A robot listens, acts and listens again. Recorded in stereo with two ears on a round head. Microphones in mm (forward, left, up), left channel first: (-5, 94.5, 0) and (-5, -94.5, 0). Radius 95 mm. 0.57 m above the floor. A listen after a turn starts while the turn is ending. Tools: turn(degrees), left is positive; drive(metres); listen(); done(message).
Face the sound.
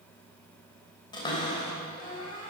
turn(degrees=20)
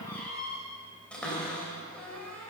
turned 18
done("Found it: a cupboard door, straight ahead, 2 to 4 m away.")